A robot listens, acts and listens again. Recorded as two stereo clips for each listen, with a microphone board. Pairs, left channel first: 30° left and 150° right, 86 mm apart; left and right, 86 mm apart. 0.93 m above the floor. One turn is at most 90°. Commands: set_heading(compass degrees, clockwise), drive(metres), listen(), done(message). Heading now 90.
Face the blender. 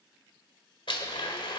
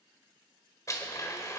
set_heading(50)
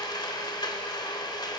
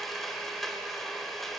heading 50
done("Found it: a blender, straight ahead.")